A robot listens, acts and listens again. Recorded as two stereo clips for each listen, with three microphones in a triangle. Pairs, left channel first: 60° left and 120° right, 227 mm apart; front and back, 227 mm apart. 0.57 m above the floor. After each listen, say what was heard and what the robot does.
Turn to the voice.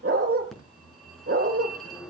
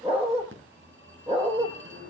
Keep listening.
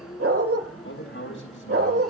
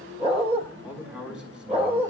The man speaking: 95° left. Turn 95° left.
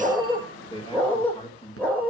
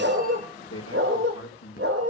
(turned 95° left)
Found it: a man speaking, straight ahead.